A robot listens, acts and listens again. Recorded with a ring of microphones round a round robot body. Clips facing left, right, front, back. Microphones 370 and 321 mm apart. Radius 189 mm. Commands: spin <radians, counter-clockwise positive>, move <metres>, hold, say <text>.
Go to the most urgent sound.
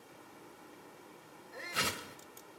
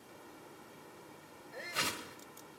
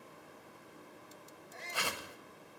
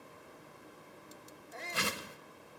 spin 2.88
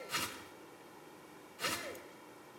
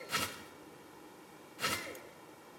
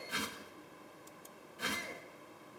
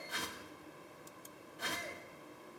spin -0.17
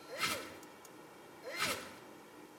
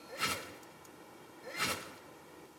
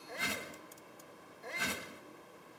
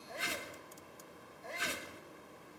move 1.0
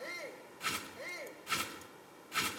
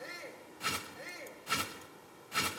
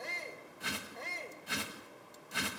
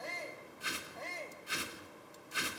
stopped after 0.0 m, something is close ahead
say Blocked. The shout is further on, straight ahead.